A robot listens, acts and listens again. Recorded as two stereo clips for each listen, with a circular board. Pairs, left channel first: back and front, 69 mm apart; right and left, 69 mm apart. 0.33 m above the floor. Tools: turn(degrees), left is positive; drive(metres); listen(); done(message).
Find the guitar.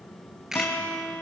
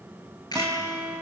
turn(degrees=115)
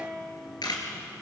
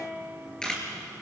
turn(degrees=25)
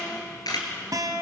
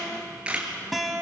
done("Facing the guitar.")